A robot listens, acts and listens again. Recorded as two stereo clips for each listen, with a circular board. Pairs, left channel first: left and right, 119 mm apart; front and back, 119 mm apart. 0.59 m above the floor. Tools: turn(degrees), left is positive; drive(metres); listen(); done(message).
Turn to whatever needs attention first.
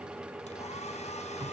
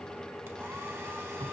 listen()
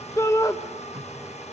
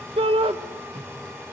turn(degrees=150)
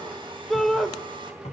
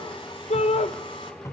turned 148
done("Facing the shout, 1 to 2 m away.")